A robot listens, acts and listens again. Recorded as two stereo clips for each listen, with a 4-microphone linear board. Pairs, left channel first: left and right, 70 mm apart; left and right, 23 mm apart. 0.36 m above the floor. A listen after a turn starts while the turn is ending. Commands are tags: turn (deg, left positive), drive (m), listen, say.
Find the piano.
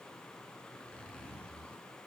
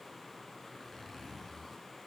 <listen/>
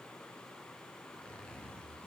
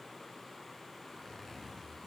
<listen/>
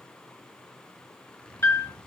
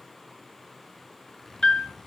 <turn deg="35"/>
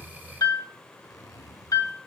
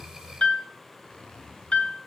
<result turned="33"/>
<turn deg="100"/>
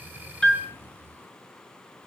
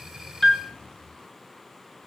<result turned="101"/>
<say>Found it: a piano, straight ahead, 2 to 4 m away.</say>